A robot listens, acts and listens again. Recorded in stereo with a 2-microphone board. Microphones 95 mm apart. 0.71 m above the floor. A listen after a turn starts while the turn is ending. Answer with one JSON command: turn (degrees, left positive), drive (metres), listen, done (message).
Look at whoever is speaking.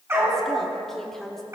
{"turn": 30}
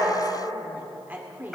{"turn": -20}
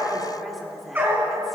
{"done": "Facing the woman speaking."}